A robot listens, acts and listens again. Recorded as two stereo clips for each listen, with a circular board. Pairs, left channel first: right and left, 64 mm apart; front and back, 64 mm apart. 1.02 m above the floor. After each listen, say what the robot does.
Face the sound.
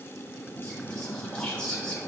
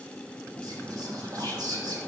Turn 165° right.
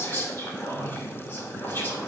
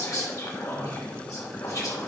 Turn 35° right.
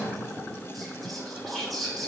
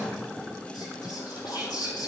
Facing the whispering, 2 to 4 m away.